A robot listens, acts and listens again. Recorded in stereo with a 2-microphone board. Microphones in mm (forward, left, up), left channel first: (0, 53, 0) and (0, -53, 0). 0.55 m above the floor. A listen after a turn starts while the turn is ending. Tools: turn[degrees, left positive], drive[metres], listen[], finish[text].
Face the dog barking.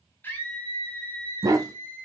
Thought: The dog barking: about 35° right or 145° right.
Action: turn[-35]
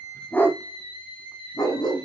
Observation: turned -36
Thought: So it is at 45° left.
Action: turn[45]
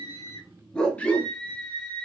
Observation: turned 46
Thought: The dog barking is now 15° left.
Action: turn[15]
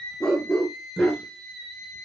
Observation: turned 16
Thought: The dog barking is now 10° left.
Action: turn[10]
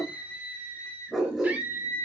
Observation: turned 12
Action: finish[Facing the dog barking, 2 to 4 m away.]